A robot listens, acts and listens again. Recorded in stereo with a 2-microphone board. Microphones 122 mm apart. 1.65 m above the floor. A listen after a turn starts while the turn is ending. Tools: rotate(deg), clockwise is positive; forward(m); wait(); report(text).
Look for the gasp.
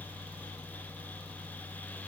wait()
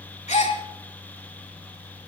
rotate(-90)
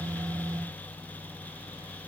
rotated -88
report("Facing where the gasp came from. I can't hear it now.")